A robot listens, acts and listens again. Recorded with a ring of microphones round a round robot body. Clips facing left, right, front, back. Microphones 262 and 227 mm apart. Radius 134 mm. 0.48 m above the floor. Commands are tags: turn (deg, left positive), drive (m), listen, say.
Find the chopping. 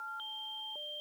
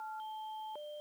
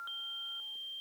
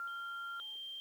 <listen/>
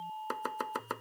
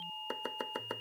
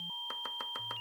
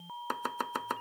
<turn deg="165"/>
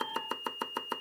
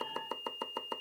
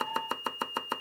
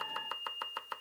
<turn deg="25"/>
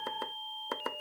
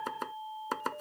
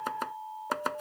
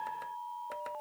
<turn deg="-20"/>
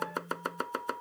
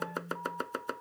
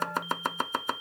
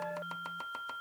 <say>Facing the chopping.</say>